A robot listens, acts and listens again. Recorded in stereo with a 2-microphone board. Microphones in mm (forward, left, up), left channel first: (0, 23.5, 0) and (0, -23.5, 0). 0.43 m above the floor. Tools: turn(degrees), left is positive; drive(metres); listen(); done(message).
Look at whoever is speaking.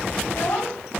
turn(degrees=70)
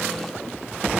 listen()
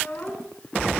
turn(degrees=35)
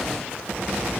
listen()
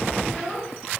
done("Found it: a child speaking, straight ahead, over 4 m away.")